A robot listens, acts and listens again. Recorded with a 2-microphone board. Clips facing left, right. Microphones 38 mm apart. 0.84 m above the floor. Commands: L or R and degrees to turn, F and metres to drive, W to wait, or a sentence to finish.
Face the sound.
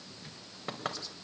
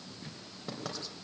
L45
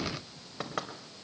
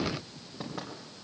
L90
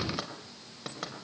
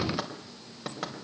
Found it: knocking, straight ahead.